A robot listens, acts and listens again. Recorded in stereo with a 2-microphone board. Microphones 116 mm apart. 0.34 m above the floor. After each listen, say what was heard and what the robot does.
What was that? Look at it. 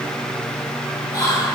The whispering: about 30° left or 150° left. Turn 30° left.
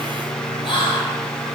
So it is at 110° left. Turn 110° left.
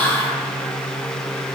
The whispering is now 15° left. Turn 15° left.
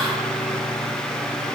Keep listening.
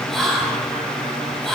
Found it: whispering, straight ahead.